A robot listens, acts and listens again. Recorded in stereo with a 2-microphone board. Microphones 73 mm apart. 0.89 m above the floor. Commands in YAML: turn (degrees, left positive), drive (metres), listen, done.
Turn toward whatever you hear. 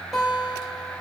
turn: 30
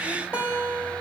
turn: -25
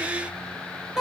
done: "Facing the guitar."